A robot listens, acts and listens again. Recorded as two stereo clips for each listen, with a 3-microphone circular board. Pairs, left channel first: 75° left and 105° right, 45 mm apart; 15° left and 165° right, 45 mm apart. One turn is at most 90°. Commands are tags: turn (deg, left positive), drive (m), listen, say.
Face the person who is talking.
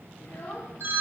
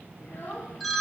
<turn deg="50"/>
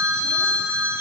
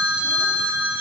<listen/>
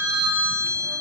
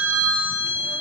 <listen/>
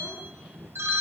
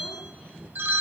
<say>Facing where the child speaking came from. I can't hear it now.</say>